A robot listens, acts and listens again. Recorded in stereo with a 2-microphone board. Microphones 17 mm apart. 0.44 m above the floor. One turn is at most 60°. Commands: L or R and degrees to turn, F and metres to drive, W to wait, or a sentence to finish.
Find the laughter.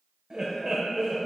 R30
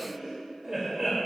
R20
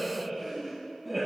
R15
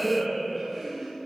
R20
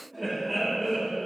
R30
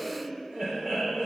R60
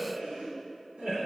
R55
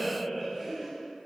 R10
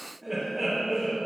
Found it: laughter, straight ahead, 2 to 4 m away.